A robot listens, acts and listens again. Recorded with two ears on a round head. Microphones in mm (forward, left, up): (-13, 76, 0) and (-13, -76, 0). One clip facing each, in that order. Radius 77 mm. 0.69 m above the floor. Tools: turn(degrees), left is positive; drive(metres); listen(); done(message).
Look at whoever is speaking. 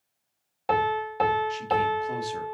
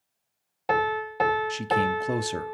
turn(degrees=-60)
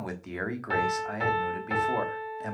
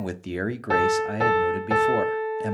turn(degrees=-40)
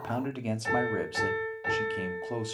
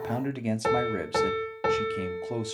turn(degrees=-10)
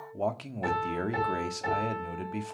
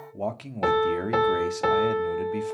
done("Facing the man speaking, 1 to 2 m away.")